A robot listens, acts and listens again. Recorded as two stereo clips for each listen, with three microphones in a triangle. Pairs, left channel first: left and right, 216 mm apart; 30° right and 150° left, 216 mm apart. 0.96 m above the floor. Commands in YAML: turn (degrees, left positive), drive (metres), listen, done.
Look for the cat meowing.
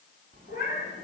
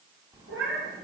turn: 135
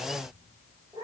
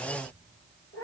turn: -20
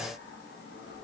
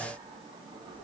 listen: true
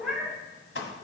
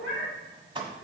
done: "Facing the cat meowing."